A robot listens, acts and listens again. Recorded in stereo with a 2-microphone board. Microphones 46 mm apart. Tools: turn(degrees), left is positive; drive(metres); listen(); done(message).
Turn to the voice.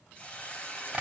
listen()
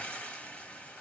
listen()
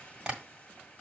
done("I can't make out anyone speaking, only a hiss and tapping.")